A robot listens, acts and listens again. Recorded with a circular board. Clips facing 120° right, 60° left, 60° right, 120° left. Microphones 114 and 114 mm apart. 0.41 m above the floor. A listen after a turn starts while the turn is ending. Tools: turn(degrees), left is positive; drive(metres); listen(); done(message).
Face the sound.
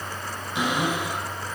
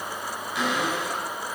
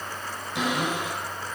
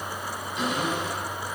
turn(degrees=-50)
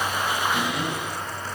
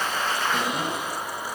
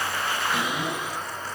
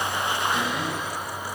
turn(degrees=10)
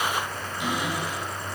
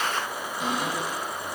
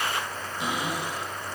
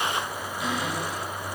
done("Facing the cupboard door, over 4 m away.")